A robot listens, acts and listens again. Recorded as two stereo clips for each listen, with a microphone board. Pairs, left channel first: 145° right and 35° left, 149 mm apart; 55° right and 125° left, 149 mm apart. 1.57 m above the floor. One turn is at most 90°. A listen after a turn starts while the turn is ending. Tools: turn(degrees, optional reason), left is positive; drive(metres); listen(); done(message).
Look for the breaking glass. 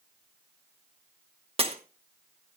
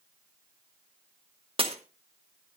turn(degrees=75, reason="The breaking glass: 75° left.")
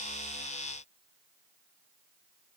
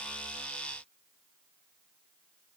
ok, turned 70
done("I heard breaking glass from this way, but can't make it out now.")